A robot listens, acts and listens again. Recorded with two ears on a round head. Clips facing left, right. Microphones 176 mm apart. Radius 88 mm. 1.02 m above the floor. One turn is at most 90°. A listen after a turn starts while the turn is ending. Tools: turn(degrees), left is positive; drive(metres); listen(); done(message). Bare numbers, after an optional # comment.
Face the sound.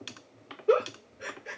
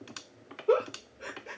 # The giggle: about 20° left or 160° left.
turn(20)
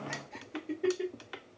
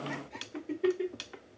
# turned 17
done("Found it: a giggle, straight ahead.")